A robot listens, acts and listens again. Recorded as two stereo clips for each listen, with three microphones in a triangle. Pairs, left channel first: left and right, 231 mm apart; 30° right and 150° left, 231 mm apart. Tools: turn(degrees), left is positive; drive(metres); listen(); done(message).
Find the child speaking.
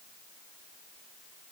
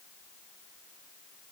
listen()
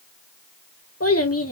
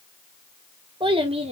turn(degrees=90)
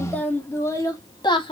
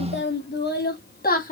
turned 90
turn(degrees=20)
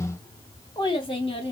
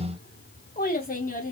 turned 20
turn(degrees=20)
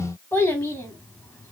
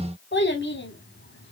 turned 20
turn(degrees=10)
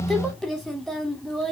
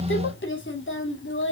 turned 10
done("Facing the child speaking.")